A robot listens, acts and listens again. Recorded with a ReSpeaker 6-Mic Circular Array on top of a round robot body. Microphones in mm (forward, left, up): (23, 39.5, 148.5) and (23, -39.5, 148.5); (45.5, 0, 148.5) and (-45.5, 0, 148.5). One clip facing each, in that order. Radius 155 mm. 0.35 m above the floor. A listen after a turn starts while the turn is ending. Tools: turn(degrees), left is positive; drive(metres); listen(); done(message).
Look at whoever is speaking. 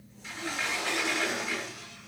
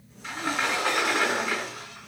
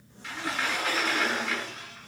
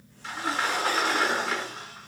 listen()
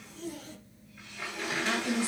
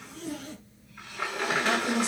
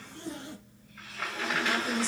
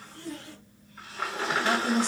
turn(degrees=-155)
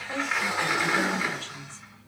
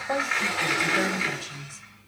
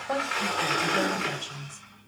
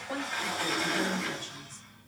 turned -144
turn(degrees=-10)
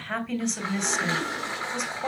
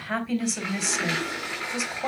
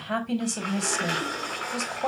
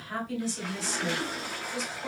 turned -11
done("Found it: a woman speaking, straight ahead, 2 to 4 m away.")